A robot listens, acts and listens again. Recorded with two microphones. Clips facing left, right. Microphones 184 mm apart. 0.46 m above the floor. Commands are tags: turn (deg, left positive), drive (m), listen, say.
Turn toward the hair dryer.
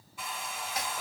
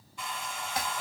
<turn deg="30"/>
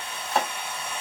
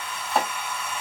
<turn deg="140"/>
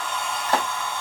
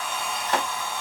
<say>Found it: a hair dryer, straight ahead.</say>